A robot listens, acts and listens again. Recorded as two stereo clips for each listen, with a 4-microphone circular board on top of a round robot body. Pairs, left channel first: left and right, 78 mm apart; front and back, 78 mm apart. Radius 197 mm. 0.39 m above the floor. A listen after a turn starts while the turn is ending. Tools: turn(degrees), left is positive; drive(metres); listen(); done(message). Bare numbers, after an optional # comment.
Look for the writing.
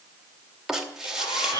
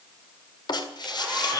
done("Found it: writing, straight ahead, 2 to 4 m away.")